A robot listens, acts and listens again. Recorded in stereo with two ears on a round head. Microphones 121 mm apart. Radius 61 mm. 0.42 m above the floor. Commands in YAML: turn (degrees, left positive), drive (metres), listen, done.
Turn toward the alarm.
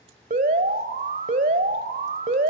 turn: -60
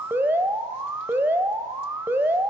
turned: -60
turn: -20
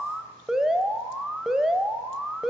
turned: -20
done: "Facing the alarm."